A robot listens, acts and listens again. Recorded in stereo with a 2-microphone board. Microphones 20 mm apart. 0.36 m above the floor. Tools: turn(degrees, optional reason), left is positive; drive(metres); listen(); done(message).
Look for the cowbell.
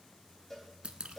turn(degrees=30)
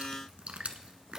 listen()
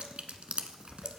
listen()
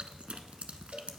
done("I heard a cowbell, but can't make it out now. It was about 20° right or 140° left.")